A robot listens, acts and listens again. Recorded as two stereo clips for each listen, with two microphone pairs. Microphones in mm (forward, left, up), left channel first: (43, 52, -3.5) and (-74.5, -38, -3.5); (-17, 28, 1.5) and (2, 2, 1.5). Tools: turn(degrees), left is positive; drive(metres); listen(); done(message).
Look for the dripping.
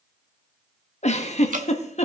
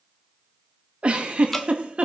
turn(degrees=-150)
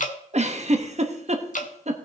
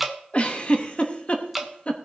turn(degrees=30)
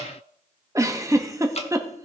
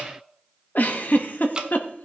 done("Facing the dripping.")